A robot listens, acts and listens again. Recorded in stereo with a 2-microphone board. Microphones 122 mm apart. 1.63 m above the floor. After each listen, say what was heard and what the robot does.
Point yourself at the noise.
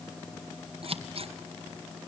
The scissors: about 55° right or 125° right. Turn 55° right.
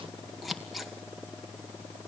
Facing the scissors, 1 to 2 m away.